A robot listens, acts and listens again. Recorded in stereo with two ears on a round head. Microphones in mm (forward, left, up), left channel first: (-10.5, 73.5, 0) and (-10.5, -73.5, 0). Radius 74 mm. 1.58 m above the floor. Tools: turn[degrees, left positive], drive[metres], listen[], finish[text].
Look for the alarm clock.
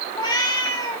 Action: listen[]
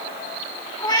Action: listen[]
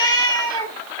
Action: finish[I can't make out an alarm clock to turn to.]